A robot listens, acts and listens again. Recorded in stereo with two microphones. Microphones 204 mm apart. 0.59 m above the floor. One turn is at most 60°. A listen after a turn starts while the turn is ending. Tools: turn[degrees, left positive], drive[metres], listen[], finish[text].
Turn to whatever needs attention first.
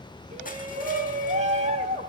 Thought: The shout: about 35° right or 145° right.
Action: turn[-35]
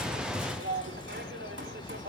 Thought: So it is at 110° right.
Action: turn[-60]
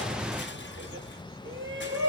Thought: The shout is now 80° right.
Action: turn[-60]
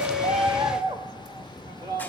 Thought: The shout is now 20° right.
Action: turn[-20]
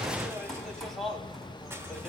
Action: finish[Facing the shout, 2 to 4 m away.]